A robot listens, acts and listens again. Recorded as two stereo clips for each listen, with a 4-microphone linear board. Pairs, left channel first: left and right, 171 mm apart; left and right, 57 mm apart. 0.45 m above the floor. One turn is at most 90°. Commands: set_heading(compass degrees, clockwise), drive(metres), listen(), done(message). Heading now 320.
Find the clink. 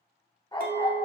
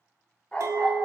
set_heading(15)
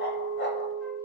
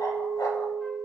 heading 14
set_heading(34)
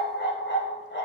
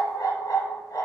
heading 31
listen()
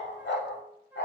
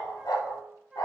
listen()
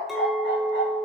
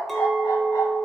done("Found it: a clink, straight ahead, under 1 m away.")